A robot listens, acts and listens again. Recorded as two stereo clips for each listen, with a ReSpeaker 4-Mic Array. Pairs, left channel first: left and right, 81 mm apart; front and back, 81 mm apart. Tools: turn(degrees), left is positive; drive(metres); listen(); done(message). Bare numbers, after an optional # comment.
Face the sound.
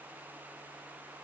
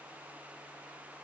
listen()
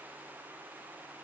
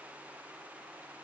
listen()
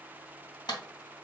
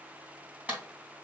# The clap: 110° left.
turn(110)
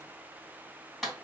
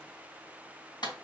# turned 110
done("Found it: a clap, straight ahead, 2 to 4 m away.")